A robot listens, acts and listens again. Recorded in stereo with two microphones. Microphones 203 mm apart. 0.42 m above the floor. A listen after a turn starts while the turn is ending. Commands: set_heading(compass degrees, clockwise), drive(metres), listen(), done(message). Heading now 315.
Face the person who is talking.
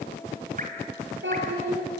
set_heading(25)
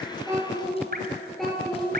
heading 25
done("Facing the child speaking, over 4 m away.")